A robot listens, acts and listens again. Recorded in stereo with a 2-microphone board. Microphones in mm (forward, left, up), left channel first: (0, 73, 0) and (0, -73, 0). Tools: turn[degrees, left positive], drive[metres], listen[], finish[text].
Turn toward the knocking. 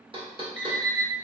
Thought: The knocking: about 35° right or 145° right.
Action: turn[-35]
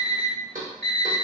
Thought: So it is at 110° right.
Action: turn[-110]
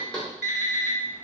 Action: finish[Facing the knocking, under 1 m away.]